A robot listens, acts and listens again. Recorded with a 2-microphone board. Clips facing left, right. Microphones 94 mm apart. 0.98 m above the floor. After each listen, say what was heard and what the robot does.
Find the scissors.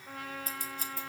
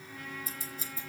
The scissors: about 65° left or 115° left. Turn 65° left.
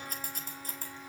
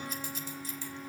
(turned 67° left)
So it is at 50° left. Turn 50° left.
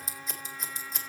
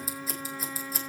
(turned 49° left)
Found it: scissors, straight ahead, 2 to 4 m away.